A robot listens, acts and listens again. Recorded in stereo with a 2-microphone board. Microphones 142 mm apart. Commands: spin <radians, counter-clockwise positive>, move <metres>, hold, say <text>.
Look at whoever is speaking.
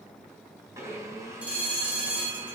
hold
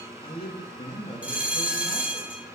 spin 0.70
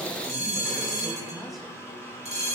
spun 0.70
say Found it: a man speaking, straight ahead, 2 to 4 m away.